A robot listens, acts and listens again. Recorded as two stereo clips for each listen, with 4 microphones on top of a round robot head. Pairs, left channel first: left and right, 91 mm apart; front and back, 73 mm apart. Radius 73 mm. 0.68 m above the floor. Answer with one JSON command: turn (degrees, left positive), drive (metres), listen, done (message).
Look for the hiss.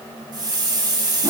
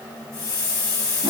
{"turn": -50}
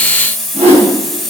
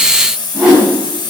{"done": "Found it: a hiss, straight ahead."}